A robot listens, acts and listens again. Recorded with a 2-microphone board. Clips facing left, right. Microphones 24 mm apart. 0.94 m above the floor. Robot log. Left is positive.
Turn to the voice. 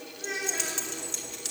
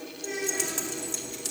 note: The child speaking: about 45° left or 135° left.
cmd yaw +45
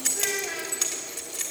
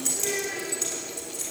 note: So it is at 85° left.
cmd yaw +85
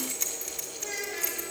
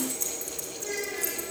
end: Facing the child speaking.